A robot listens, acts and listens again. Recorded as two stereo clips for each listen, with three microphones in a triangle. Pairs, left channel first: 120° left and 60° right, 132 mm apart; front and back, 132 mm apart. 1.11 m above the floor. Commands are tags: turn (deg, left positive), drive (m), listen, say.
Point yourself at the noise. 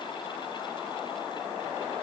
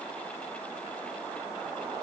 <listen/>
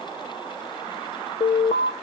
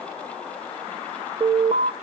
<turn deg="145"/>
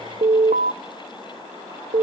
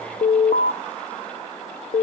<turn deg="-35"/>
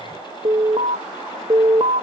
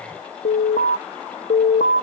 <turn deg="-10"/>
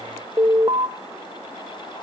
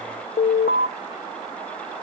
<say>Facing the alarm.</say>